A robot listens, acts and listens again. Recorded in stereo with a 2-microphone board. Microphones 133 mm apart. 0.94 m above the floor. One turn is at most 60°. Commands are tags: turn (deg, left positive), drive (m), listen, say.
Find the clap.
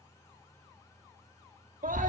<listen/>
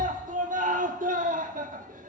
<listen/>
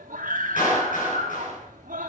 <turn deg="60"/>
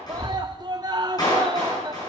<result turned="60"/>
<turn deg="30"/>
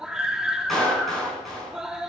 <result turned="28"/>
<say>Facing the clap, over 4 m away.</say>